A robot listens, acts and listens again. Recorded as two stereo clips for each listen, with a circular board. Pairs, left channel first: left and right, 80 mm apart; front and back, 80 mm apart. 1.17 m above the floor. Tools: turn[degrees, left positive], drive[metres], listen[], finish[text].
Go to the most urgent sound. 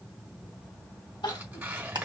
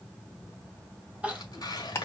Thought: The crying: 105° left.
Action: turn[105]
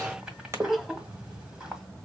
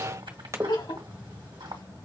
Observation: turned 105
Action: drive[1.0]
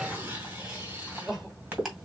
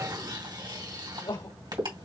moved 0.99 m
Thought: The crying is now 10° right.
Action: turn[-10]
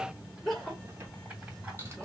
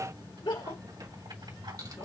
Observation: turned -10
Action: drive[1.0]
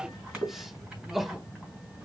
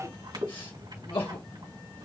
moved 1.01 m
Action: drive[1.0]
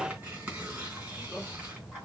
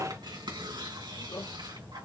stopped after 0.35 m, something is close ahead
Action: finish[I am next to the crying.]